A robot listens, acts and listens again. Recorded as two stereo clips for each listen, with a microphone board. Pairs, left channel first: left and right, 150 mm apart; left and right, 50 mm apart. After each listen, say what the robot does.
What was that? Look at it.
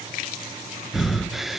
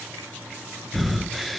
Turn 30° left.
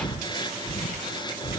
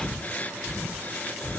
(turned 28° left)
Turn 150° left.
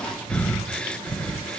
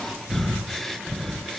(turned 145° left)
Facing the breathing.